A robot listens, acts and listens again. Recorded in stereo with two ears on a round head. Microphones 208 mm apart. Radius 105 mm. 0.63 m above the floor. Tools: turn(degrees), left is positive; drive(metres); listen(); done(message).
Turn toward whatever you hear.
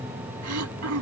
turn(degrees=-70)
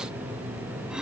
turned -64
listen()
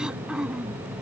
done("Facing the throat clearing.")